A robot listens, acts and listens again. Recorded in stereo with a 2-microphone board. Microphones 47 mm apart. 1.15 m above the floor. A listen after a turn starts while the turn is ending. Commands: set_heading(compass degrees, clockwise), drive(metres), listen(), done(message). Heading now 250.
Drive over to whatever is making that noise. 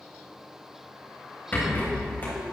set_heading(215)
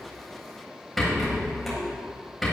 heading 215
drive(1.0)
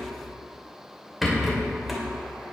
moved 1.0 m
drive(1.0)
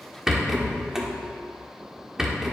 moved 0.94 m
set_heading(225)
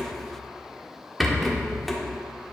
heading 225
drive(1.0)
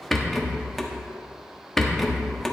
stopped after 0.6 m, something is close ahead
done("I am next to the rattle.")